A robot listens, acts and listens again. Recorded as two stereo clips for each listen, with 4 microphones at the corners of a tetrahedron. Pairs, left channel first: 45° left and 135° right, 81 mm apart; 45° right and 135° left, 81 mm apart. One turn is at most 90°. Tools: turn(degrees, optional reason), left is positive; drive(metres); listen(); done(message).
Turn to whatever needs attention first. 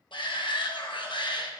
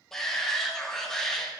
turn(degrees=40, reason="The shout: 40° left.")
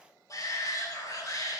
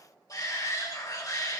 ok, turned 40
done("Facing the shout.")